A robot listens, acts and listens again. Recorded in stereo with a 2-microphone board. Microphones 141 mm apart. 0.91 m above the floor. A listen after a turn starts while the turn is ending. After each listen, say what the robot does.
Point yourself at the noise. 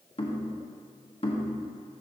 Turn 40° left.
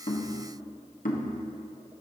Turn 95° left.
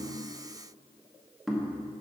Facing the knocking, 1 to 2 m away.